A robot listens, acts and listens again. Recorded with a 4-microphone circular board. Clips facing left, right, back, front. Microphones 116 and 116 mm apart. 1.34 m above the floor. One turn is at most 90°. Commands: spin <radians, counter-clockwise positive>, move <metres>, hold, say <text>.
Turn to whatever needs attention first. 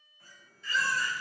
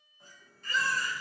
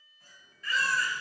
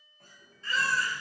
spin -1.05
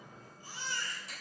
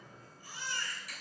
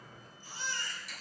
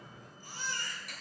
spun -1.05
spin 0.52
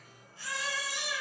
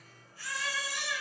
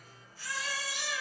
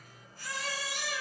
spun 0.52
spin 0.44
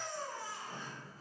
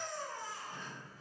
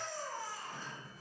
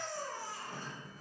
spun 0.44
say Found it: a baby crying, straight ahead, 2 to 4 m away.